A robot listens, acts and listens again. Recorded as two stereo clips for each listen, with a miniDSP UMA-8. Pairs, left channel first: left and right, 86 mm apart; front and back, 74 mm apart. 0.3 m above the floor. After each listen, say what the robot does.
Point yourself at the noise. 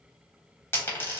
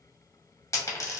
Turn 35° left.
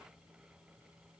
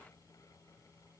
Facing where the dropped coin came from. I can't hear it now.